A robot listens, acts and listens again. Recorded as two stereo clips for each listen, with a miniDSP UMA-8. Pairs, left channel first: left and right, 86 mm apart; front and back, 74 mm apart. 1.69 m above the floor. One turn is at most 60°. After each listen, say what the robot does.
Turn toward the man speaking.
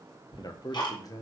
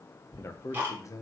Turn 40° left.
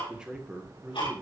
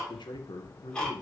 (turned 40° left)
Turn 20° right.
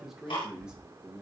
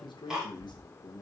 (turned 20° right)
Turn 15° right.
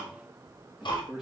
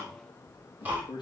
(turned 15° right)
Found it: a man speaking, straight ahead, 2 to 4 m away.